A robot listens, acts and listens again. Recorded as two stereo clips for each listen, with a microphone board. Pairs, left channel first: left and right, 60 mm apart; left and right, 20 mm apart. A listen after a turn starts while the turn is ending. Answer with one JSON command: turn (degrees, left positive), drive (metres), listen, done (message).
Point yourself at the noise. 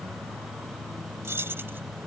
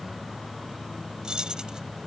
{"turn": -40}
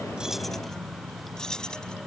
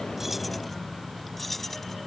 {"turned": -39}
{"turn": 15}
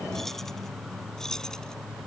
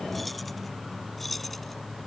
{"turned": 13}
{"turn": 10}
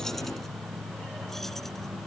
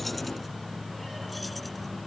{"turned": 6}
{"listen": true}
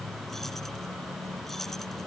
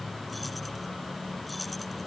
{"listen": true}
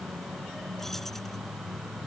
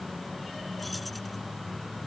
{"done": "I heard keys jangling from this way, but can't make it out now."}